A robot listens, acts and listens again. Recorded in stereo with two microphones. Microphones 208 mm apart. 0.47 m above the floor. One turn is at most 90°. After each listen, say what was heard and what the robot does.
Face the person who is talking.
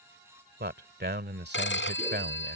The man speaking: about 60° right or 120° right. Turn 60° right.
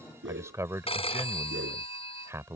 So it is at 15° right. Turn 15° right.
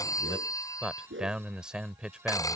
Found it: a man speaking, straight ahead.